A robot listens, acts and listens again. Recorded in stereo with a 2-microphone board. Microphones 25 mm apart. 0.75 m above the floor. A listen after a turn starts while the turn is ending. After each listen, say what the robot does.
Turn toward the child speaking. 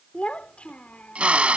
Turn 65° left.
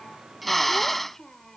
Turn 20° left.
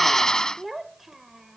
Turn 10° right.
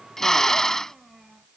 Turn 10° right.
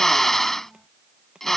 Keep listening.
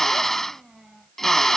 Found it: a child speaking, straight ahead.